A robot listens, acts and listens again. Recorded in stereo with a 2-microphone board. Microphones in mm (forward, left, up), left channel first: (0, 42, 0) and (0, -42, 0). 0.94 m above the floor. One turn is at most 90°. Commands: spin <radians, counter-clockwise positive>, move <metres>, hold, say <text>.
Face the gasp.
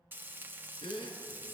spin 1.57
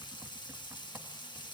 say I heard a gasp from this way, but can't make it out now.